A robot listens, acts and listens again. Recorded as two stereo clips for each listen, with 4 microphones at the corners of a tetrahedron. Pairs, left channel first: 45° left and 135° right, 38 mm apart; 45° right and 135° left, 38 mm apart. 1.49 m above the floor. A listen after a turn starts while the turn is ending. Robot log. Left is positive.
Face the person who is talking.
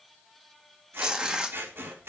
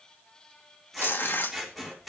cmd idle
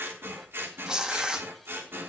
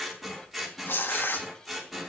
cmd idle
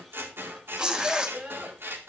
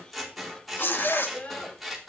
note: The child speaking: 90° right.
cmd yaw -90
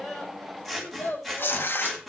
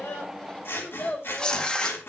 end: Found it: a child speaking, straight ahead, over 4 m away.